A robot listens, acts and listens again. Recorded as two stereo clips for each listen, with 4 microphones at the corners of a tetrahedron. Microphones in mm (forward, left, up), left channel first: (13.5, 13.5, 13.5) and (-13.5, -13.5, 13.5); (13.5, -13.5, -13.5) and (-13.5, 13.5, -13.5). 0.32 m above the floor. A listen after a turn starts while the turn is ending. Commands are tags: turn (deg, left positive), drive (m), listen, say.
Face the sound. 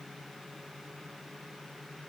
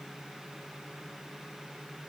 <listen/>
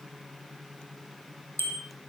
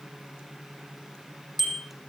<turn deg="50"/>
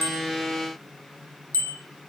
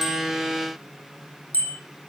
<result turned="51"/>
<say>Found it: a bicycle bell, straight ahead, over 4 m away.</say>